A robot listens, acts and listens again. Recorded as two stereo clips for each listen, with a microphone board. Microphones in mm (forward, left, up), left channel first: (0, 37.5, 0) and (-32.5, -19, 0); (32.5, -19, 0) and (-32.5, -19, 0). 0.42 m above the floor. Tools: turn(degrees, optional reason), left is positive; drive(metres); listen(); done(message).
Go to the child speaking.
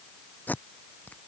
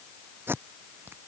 listen()
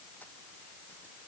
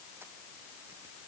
listen()
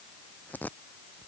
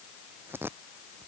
done("I can't make out a child speaking, only tape being pulled.")